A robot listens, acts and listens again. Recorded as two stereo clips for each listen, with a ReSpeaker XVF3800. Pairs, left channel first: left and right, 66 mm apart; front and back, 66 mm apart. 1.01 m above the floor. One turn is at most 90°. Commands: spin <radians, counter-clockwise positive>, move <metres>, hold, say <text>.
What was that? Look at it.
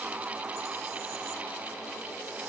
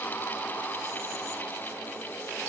hold
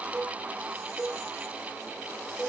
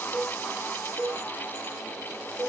spin -1.57
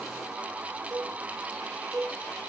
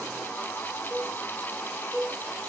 spin -1.57
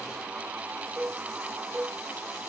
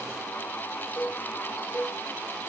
spin -0.96
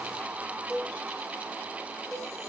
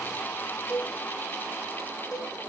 say Facing the cowbell, over 4 m away.